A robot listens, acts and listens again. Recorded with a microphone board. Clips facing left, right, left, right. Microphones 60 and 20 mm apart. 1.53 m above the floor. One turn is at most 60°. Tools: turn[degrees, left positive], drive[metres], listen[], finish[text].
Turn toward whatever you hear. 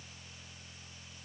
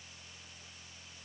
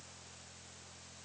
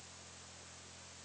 Action: listen[]
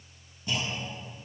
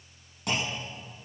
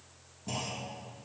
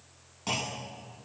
Action: turn[-60]
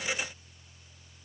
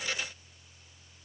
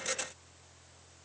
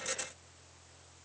Thought: Nothing new. It was at 30° right.
Action: turn[-30]
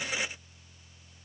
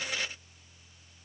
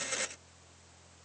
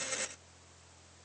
Action: finish[I heard a clunk from this way, but can't make it out now.]